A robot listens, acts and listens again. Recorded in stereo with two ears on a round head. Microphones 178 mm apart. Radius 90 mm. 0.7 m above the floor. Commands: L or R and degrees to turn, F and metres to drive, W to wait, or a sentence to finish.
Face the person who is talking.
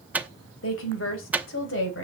L65
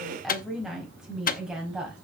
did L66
Found it: a woman speaking, straight ahead, over 4 m away.